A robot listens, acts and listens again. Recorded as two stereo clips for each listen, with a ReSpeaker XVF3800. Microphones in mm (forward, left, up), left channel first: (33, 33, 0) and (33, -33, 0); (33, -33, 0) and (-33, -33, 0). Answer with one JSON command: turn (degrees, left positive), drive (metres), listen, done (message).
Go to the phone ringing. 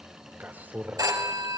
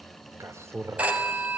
{"turn": -115}
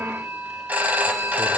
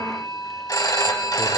{"turn": -25}
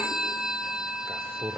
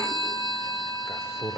{"drive": 1.0}
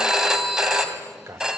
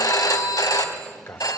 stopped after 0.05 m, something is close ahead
{"turn": -10}
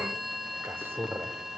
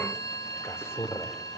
{"done": "Blocked. The phone ringing is further on, straight ahead."}